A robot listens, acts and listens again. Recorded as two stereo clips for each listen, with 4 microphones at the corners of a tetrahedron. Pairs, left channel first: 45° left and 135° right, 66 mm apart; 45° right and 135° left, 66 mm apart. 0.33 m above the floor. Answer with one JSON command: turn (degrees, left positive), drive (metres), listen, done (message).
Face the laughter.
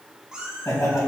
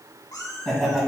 {"turn": 40}
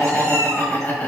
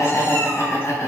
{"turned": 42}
{"turn": -20}
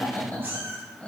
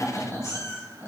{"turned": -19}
{"turn": -10}
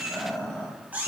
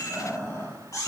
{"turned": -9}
{"turn": -20}
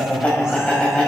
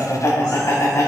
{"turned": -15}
{"turn": -25}
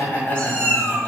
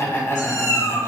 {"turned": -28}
{"done": "Found it: laughter, straight ahead, 1 to 2 m away."}